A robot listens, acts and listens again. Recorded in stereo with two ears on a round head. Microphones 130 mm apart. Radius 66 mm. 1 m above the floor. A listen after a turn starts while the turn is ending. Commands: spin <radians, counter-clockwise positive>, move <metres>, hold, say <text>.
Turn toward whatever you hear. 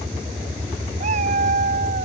spin -0.87
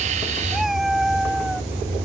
say Found it: a cat meowing, straight ahead.